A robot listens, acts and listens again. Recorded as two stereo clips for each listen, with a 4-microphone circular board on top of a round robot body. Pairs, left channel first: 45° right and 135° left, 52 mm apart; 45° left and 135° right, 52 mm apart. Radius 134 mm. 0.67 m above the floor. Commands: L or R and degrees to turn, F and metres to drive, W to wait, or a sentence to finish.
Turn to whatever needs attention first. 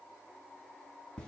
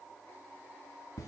W
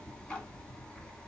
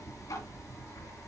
W
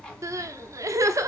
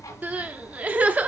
L160
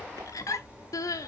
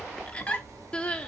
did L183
R25
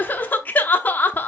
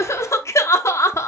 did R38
L15
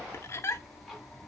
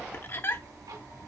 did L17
Facing the crying.